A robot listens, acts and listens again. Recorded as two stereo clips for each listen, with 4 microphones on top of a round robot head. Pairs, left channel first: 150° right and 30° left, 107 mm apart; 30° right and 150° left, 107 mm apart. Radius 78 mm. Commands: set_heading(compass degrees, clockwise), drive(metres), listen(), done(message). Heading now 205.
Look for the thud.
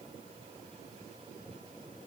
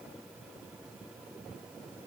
listen()
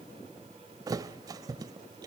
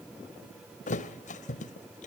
set_heading(230)
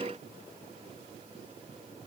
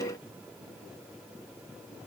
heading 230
done("I heard a thud from this way, but can't make it out now.")